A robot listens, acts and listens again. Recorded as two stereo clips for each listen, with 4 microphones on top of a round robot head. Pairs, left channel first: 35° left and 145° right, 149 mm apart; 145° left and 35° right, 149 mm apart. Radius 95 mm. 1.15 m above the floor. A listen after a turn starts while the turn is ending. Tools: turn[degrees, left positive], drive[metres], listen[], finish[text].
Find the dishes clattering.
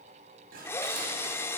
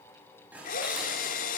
Thought: The dishes clattering: 115° right.
Action: turn[-115]
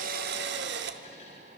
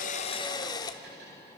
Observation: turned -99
Thought: Nothing new. It was at 15° right.
Action: turn[-15]
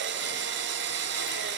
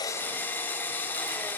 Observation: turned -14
Action: listen[]
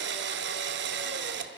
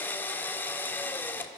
Action: finish[Facing where the dishes clattering came from. I can't hear it now.]